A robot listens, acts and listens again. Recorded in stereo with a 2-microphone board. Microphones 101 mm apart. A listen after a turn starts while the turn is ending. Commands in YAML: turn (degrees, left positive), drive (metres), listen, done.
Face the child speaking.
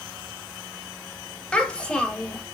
turn: 30
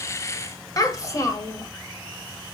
turn: 140
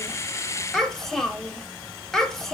done: "Facing the child speaking."